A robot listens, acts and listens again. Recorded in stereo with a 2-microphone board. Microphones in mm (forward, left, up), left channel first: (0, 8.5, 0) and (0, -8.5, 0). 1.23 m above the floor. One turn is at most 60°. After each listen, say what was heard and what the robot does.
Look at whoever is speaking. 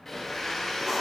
Keep listening.
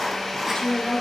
The woman speaking: about 50° left or 130° left. Turn 50° left.
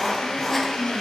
So it is at 80° left. Turn 60° left.
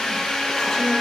Nothing new. It was at 20° left. Turn 20° left.
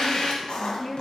The woman speaking is now 20° left. Turn 20° left.
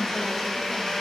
Keep listening.
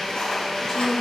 Found it: a woman speaking, straight ahead.